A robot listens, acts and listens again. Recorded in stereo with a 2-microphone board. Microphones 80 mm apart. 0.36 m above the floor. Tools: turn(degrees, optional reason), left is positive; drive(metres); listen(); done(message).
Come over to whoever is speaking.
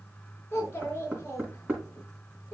turn(degrees=25, reason="The child speaking: about 25° left or 155° left.")
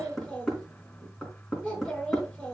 drive(metres=1.0)
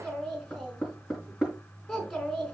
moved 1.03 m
drive(metres=1.0)
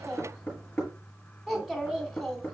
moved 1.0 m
drive(metres=1.0)
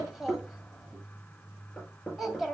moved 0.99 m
drive(metres=1.0)
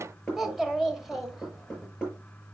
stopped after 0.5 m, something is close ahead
done("I am next to the child speaking.")